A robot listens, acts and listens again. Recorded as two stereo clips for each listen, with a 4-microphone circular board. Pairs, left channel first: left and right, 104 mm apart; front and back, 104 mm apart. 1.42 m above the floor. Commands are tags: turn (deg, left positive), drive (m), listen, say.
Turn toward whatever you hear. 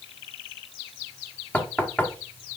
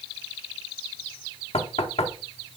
<turn deg="15"/>
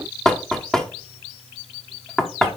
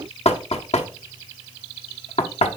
<say>Found it: knocking, straight ahead, 1 to 2 m away.</say>